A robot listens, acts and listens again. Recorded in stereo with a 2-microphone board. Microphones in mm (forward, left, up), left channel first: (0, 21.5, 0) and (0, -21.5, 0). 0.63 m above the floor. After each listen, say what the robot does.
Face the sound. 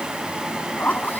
Turn 45° left.
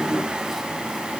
Keep listening.
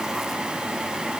Keep listening.
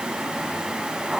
Found it: a zipper, straight ahead.